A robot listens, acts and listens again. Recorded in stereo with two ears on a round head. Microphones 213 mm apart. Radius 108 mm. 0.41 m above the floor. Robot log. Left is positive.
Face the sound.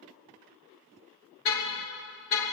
note: The car horn: about 60° left or 120° left.
cmd yaw +60
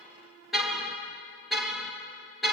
end: Found it: a car horn, straight ahead.